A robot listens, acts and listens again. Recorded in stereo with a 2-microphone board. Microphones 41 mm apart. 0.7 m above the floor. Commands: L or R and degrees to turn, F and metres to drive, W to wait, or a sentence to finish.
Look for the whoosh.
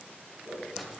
R55
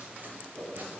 R65
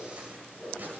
Found it: a whoosh, straight ahead, 2 to 4 m away.